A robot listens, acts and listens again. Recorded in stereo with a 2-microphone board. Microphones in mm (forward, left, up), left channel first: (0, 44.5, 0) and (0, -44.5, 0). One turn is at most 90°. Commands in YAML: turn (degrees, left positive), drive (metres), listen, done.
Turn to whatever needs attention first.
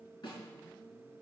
listen: true
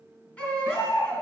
turn: 15
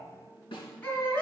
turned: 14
turn: 90
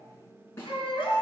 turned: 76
turn: 75
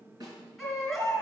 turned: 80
done: "Found it: a baby crying, straight ahead."